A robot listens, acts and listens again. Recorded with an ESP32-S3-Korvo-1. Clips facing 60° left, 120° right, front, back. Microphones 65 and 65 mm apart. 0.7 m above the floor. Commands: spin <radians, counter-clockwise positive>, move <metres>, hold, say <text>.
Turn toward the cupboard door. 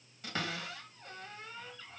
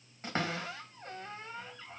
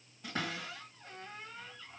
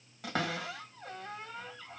spin 3.14
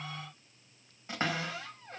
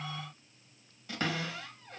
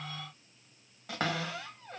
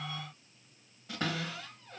say Facing the cupboard door, 1 to 2 m away.